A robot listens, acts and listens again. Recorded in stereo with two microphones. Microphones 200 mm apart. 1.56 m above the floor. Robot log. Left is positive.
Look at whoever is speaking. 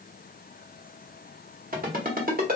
cmd idle
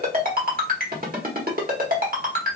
cmd idle
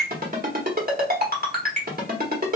end: I can't make out anyone speaking, only a ringtone.